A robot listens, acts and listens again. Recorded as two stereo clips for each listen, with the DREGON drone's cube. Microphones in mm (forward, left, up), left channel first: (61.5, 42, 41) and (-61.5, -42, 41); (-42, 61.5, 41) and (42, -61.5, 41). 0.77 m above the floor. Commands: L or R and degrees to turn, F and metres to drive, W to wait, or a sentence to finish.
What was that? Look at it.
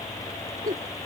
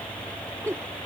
R125
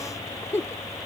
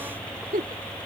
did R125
R40
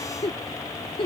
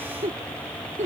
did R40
R20
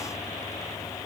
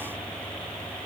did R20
W
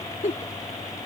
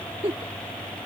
Facing the giggle.